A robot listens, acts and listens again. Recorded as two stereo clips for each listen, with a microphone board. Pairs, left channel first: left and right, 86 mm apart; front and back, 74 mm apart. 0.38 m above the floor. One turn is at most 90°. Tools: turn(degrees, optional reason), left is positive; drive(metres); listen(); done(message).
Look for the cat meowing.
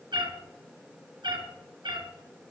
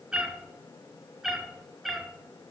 turn(degrees=-90, reason="The cat meowing: 90° right.")
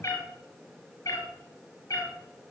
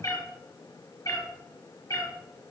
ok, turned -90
turn(degrees=40, reason="The cat meowing is now 40° left.")
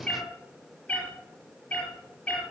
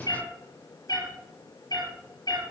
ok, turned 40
turn(degrees=10, reason="The cat meowing is now 10° left.")
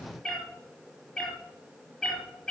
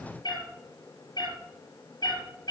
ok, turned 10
done("Found it: a cat meowing, straight ahead, over 4 m away.")